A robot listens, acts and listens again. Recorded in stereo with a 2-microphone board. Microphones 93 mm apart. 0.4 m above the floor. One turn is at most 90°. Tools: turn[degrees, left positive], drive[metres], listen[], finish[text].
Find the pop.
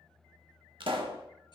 Thought: The pop: about 70° right or 110° right.
Action: turn[-70]
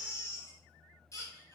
Action: listen[]
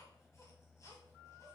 Action: finish[I heard a pop, but can't make it out now. It was about straight ahead or 40° right.]